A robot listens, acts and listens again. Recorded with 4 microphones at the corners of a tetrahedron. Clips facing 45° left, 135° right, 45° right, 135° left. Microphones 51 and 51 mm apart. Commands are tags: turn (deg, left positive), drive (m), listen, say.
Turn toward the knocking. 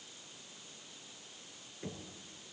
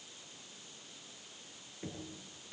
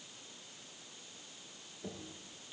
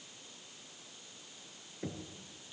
<turn deg="140"/>
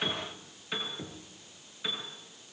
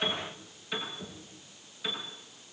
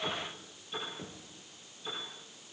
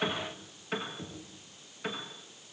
<turn deg="30"/>
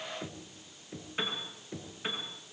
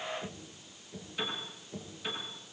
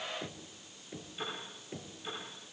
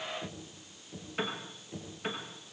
<say>Facing the knocking.</say>